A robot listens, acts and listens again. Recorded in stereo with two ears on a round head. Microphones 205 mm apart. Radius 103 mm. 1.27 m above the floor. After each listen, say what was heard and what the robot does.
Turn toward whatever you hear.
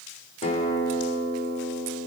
The guitar: about 30° left or 150° left. Turn 30° left.
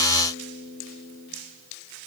Facing the guitar, 2 to 4 m away.